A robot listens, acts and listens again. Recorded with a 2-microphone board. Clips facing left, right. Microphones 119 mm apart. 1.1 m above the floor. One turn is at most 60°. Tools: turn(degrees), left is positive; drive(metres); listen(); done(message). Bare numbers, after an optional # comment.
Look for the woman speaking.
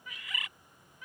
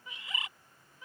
listen()
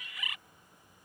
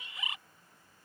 listen()
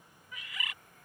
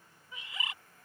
done("I can't make out a woman speaking to turn to.")